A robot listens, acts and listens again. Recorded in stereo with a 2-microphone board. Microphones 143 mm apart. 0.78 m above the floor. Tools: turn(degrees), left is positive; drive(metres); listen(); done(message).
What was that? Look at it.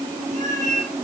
turn(degrees=-60)
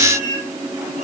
turn(degrees=-65)
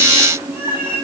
turn(degrees=-15)
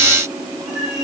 listen()
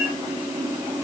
listen()
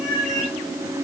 done("Facing the cat meowing.")